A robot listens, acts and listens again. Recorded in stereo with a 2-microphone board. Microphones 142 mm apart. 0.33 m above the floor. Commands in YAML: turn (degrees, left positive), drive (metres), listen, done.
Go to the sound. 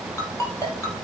turn: 20
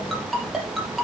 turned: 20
drive: 1.0
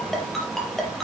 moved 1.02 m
drive: 1.0
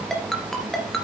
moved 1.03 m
drive: 1.0
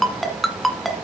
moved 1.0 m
drive: 1.0
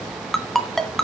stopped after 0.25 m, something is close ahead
done: "Arrived at the ringtone, straight ahead."